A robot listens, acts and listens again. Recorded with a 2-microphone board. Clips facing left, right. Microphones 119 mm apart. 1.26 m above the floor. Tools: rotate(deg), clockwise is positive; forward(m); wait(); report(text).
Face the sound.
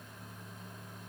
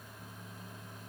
wait()
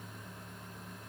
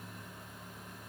wait()
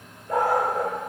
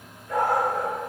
rotate(-40)
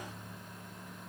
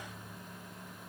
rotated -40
wait()
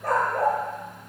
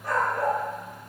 rotate(-100)
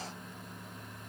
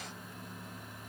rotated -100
wait()
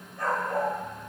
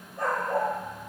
rotate(25)
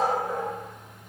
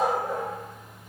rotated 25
rotate(10)
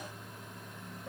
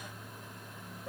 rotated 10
wait()
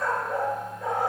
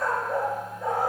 report("Facing the dog barking.")